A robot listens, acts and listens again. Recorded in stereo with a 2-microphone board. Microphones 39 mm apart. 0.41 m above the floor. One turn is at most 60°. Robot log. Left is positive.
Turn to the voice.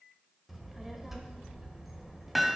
cmd yaw -30
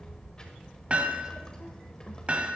note: So it is at 20° left.
cmd yaw +20
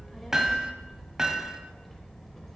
end: Facing the child speaking.